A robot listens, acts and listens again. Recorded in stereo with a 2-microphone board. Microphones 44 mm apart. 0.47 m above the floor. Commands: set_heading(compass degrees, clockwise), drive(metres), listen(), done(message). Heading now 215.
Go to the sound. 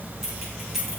set_heading(245)
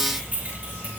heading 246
set_heading(26)
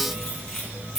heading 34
set_heading(24)
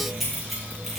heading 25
drive(1.0)
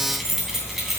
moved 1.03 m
drive(1.0)
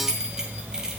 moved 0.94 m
set_heading(35)
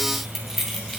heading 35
drive(1.0)
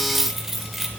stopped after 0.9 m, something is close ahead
done("Arrived at the keys jangling, straight ahead.")